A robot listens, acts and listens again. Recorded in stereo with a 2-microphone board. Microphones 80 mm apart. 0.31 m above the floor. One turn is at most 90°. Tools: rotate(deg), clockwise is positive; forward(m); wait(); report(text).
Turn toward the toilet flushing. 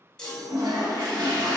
rotate(60)
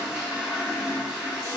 rotate(10)
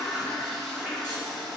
report("Facing the toilet flushing, under 1 m away.")